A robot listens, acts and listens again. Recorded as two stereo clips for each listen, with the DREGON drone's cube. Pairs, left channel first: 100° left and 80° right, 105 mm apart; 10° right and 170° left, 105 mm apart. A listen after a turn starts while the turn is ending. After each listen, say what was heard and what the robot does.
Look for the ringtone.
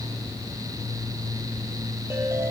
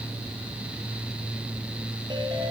The ringtone: 145° right. Turn 145° right.
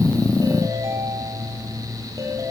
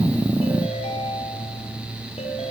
The ringtone is now 20° right. Turn 20° right.
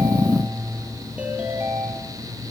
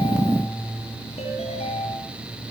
Facing the ringtone.